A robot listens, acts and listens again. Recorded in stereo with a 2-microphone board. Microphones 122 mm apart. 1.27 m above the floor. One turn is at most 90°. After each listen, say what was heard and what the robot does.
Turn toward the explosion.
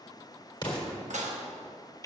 The explosion: about 35° left or 145° left. Turn 35° left.
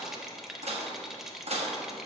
Keep listening.
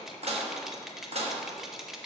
I heard an explosion, but can't make it out now. It was about straight ahead or 110° left.